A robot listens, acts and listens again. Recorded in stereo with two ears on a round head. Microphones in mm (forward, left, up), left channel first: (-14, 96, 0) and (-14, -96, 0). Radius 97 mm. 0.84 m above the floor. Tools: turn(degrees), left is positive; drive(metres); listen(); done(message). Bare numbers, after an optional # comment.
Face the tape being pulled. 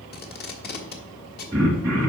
# The tape being pulled: about 50° left or 130° left.
turn(50)
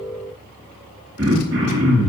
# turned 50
listen()
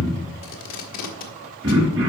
# So it is at 80° left.
turn(80)
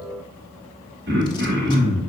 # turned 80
listen()
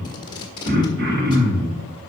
# The tape being pulled is now 20° left.
turn(20)
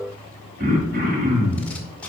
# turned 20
listen()
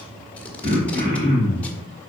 listen()
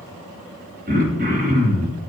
done("I heard tape being pulled from this way, but can't make it out now.")